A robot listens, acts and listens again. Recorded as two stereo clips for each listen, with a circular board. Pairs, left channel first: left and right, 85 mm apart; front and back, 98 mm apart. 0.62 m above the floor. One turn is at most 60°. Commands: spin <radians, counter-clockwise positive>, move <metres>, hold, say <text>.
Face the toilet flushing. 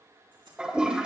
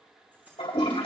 spin -0.17
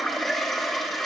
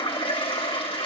say Facing the toilet flushing, 2 to 4 m away.